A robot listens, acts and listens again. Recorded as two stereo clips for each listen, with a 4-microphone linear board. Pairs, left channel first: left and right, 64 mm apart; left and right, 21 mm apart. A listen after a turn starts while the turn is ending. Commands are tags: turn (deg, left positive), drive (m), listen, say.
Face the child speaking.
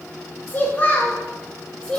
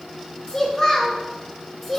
<turn deg="30"/>
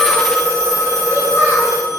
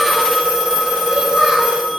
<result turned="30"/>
<listen/>
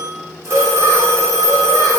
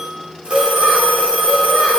<listen/>
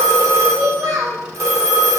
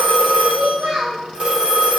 <turn deg="-60"/>
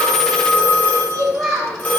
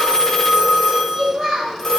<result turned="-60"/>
<turn deg="10"/>
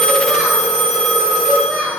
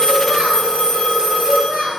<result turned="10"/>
<say>Facing the child speaking, 2 to 4 m away.</say>